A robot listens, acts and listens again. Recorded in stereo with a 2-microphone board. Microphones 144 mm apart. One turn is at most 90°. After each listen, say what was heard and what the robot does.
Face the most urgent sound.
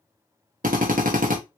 Keep listening.
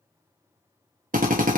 Keep listening.
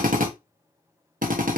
I can't make out anything urgent, only a drill.